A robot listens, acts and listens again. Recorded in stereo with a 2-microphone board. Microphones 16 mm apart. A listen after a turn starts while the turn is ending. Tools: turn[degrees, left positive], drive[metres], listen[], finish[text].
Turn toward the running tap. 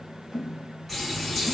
Action: turn[30]
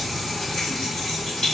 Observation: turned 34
Thought: So it is at 135° left.
Action: turn[135]
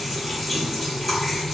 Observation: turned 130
Thought: The running tap is now 10° left.
Action: turn[10]
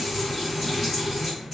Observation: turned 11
Action: finish[Facing the running tap, 1 to 2 m away.]